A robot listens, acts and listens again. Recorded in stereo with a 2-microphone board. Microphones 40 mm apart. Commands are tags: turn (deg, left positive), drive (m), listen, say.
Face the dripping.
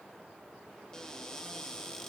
<listen/>
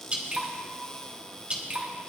<turn deg="-30"/>
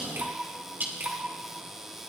<turn deg="-115"/>
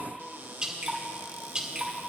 <turn deg="-25"/>
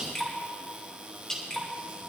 <turn deg="15"/>
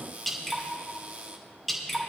<say>Facing the dripping.</say>